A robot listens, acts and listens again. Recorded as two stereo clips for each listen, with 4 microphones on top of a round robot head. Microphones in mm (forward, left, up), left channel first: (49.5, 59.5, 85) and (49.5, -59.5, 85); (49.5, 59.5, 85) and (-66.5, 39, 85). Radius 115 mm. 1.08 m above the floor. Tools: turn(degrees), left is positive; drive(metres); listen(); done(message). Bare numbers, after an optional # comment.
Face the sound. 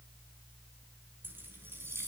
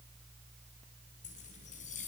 # The keys jangling: 20° right.
turn(-20)
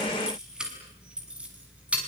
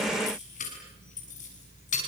# The keys jangling is now 10° right.
turn(-10)
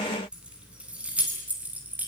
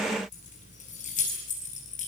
# The keys jangling is now 15° right.
turn(-15)
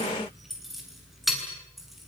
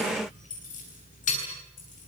done("Facing the keys jangling, over 4 m away.")